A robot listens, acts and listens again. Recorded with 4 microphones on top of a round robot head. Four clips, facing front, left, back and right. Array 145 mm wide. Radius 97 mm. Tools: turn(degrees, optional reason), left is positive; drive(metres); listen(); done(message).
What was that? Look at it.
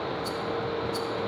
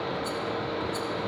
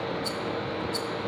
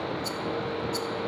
turn(degrees=-125, reason="The rattle: 125° right.")
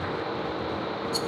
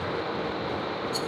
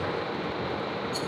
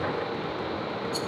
done("Found it: a rattle, straight ahead.")